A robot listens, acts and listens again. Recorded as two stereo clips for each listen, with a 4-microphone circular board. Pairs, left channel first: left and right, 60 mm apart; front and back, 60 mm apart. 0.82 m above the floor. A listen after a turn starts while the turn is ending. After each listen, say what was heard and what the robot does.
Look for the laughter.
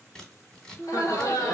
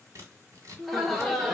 The laughter: 85° left. Turn 85° left.
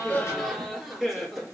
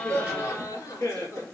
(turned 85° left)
Found it: laughter, straight ahead.